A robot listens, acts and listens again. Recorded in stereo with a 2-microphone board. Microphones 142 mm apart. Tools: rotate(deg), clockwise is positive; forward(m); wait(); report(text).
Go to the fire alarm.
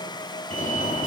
rotate(-65)
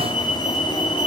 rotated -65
rotate(-45)
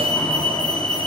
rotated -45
rotate(-10)
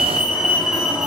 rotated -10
forward(1.0)
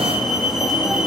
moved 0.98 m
forward(1.0)
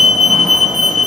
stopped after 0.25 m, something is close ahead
report("Blocked. The fire alarm is further on, straight ahead.")